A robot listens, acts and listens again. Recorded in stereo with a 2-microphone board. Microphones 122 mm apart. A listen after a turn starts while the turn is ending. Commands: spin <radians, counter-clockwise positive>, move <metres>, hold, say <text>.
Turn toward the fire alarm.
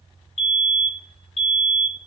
spin 1.05
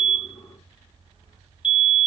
spin 0.87
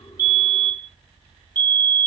spin 0.26
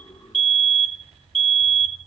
say Facing the fire alarm.